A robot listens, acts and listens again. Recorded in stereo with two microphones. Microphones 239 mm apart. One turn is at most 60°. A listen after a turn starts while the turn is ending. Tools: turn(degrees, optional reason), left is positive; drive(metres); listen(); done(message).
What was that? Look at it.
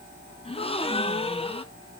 turn(degrees=25, reason="The gasp: about 25° left or 155° left.")
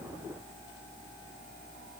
listen()
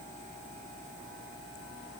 done("I heard a gasp, but can't make it out now. It was about straight ahead or 130° left.")